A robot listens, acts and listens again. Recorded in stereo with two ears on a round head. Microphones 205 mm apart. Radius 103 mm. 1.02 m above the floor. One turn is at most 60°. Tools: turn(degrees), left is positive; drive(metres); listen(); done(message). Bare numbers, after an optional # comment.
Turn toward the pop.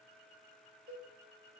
listen()
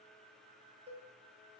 listen()
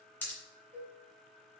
turn(30)
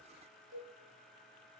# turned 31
listen()
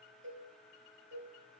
done("I heard a pop, but can't make it out now. It was about 20° right or 140° left.")